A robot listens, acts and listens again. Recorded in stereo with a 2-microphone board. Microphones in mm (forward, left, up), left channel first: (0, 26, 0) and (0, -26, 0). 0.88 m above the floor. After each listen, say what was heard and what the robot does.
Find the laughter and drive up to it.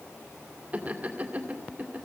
The laughter: about 30° right or 150° right. Turn 30° right.
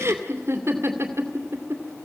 So it is at 115° right. Turn 115° right.
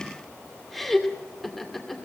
Drive 1.0 m forward.
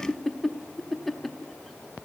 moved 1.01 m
Drive 1.0 m forward.
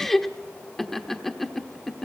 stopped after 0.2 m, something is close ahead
Arrived at the laughter, straight ahead.